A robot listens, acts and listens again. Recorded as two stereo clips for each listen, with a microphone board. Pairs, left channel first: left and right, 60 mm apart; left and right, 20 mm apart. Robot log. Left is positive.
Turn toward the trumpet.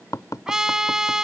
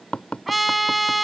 cmd yaw -30
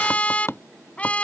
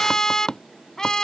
note: So it is at 25° left.
cmd yaw +25
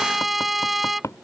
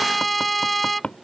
end: Found it: a trumpet, straight ahead.